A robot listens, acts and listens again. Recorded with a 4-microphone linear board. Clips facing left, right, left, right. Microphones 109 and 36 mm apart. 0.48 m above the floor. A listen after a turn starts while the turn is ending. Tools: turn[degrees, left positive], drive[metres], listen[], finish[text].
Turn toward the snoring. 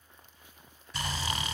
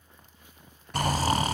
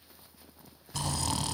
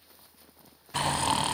Thought: The snoring: about 40° right or 140° right.
Action: turn[-40]
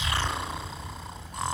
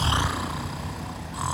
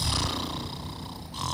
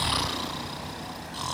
Action: finish[Found it: snoring, straight ahead.]